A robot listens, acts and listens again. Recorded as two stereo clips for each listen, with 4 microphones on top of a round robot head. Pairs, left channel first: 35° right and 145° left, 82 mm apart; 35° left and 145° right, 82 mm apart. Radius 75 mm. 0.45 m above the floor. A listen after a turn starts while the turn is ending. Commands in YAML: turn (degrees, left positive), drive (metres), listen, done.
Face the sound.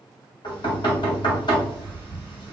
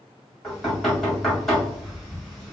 turn: -55
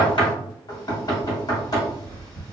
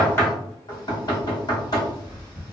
done: "Found it: knocking, straight ahead."